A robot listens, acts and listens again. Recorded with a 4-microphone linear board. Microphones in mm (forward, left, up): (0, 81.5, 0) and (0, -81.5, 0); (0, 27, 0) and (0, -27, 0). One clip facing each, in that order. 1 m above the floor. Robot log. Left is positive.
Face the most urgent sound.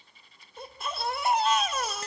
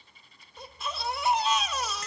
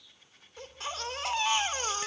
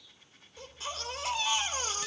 note: The baby crying: about 55° left or 125° left.
cmd yaw +55
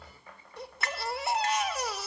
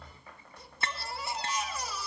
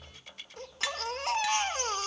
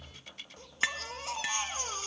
note: So it is at 70° left.
cmd yaw +70
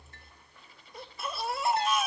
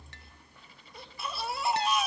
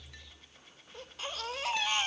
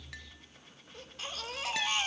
end: Facing the baby crying.